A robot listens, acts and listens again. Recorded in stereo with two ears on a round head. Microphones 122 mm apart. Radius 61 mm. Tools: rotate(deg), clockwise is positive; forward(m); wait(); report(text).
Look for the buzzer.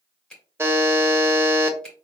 rotate(20)
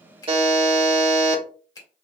rotate(140)
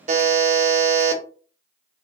rotate(55)
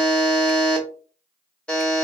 report("Facing the buzzer, 1 to 2 m away.")